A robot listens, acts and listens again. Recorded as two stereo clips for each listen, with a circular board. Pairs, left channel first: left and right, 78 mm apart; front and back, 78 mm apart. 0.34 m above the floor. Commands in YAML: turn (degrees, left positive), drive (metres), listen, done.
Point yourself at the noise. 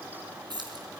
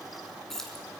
turn: -85
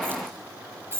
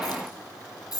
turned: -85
turn: -35
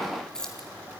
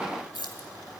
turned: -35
turn: 10
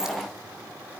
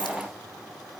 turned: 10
listen: true
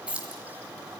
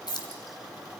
turn: -15
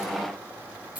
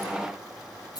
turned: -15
turn: -20
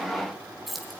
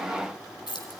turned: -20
done: "Facing the keys jangling."